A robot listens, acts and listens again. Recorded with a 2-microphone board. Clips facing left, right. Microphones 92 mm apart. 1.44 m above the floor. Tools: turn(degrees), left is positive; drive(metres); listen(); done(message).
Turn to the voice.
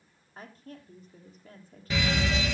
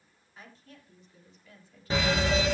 turn(degrees=45)
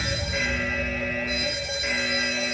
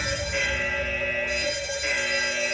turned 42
listen()
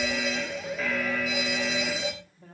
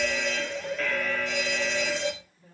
turn(degrees=95)
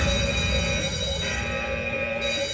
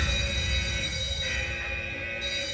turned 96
listen()
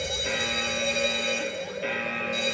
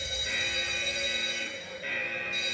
listen()
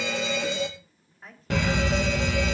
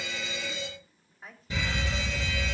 done("Facing the woman speaking, 2 to 4 m away.")